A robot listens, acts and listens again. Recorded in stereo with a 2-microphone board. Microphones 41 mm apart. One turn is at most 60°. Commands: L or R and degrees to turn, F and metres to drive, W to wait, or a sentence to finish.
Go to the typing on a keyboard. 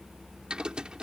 R25
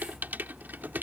R60
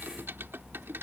R60
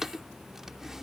R10
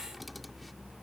W
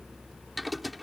F1.0
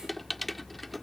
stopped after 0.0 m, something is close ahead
Something is in my way. I am facing the typing on a keyboard but have not reached it.